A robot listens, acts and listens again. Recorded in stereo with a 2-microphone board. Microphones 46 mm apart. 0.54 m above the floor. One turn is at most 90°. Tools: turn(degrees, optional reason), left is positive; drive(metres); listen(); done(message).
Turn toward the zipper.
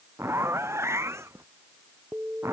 turn(degrees=-75, reason="The zipper: about 75° right or 105° right.")
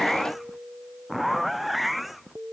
done("Facing the zipper.")